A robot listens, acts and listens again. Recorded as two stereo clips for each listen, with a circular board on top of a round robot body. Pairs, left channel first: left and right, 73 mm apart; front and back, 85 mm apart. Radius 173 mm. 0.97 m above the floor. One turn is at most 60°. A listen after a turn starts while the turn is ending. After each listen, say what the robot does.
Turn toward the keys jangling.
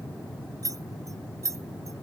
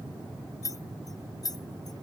Turn 45° right.
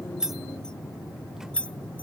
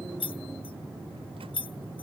Turn 15° left.
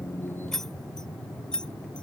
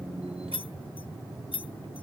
Turn 10° left.
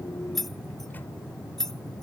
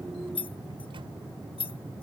Found it: keys jangling, straight ahead.